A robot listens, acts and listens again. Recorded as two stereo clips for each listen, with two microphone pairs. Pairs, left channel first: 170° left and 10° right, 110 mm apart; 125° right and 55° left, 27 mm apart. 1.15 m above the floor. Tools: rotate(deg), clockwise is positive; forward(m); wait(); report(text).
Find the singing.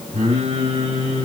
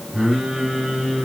report("Found it: singing, straight ahead, over 4 m away.")